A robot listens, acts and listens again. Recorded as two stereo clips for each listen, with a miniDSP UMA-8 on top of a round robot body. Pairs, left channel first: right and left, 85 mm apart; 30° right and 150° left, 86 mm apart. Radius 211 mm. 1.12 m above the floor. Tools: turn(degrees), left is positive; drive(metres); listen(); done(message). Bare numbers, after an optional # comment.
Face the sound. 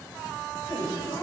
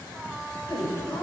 # The woman speaking: 50° right.
turn(-50)
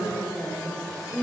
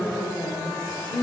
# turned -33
done("Facing the woman speaking, 2 to 4 m away.")